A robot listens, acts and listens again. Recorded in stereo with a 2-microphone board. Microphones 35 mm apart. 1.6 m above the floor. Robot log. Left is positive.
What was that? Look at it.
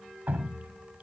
note: The dripping: about 50° right or 130° right.
cmd yaw -50
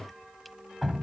end: Facing the dripping.